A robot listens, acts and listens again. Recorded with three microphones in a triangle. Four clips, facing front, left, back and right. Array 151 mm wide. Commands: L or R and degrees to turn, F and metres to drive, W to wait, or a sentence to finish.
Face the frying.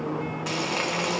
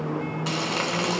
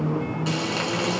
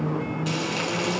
L80
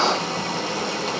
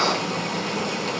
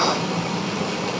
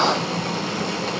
R30
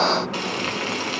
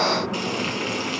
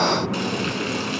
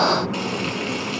Found it: frying, straight ahead, over 4 m away.